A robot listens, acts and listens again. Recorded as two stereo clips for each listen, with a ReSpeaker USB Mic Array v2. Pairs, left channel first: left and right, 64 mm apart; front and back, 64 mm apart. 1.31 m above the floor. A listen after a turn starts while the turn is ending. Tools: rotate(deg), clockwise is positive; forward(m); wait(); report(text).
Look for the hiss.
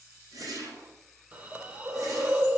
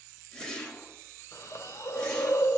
rotate(30)
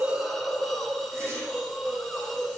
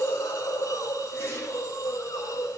report("Found it: a hiss, straight ahead, 2 to 4 m away.")